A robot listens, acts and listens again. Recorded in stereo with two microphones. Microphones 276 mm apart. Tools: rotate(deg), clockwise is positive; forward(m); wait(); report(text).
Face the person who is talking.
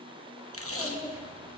rotate(30)
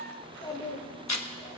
rotate(-15)
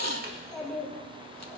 report("Found it: a child speaking, straight ahead, 2 to 4 m away.")